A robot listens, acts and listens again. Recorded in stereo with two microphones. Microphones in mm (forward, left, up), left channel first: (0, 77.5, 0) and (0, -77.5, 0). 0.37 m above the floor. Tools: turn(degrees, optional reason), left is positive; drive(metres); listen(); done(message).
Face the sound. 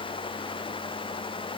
listen()
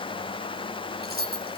turn(degrees=-90)
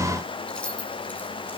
listen()
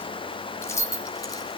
turn(degrees=20, reason="The keys jangling is now 20° left.")
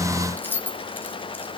turn(degrees=10, reason="The keys jangling is now 10° left.")
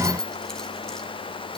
done("Facing the keys jangling, 1 to 2 m away.")